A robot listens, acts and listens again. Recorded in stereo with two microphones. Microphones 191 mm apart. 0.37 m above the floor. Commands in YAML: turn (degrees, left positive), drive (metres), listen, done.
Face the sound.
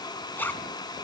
turn: 30
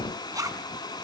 turn: -20
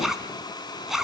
done: "Found it: a zipper, straight ahead, 1 to 2 m away."